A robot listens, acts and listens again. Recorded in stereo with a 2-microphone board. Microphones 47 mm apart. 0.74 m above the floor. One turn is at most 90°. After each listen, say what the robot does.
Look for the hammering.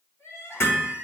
Turn 65° left.
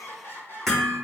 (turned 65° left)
Facing the hammering.